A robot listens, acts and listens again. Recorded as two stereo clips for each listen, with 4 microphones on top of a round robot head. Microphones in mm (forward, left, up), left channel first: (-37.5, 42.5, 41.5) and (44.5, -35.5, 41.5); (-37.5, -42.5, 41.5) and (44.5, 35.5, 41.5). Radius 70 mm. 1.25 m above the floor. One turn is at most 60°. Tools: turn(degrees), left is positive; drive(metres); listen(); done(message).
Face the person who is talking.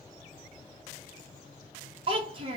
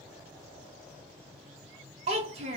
done("Facing the child speaking, under 1 m away.")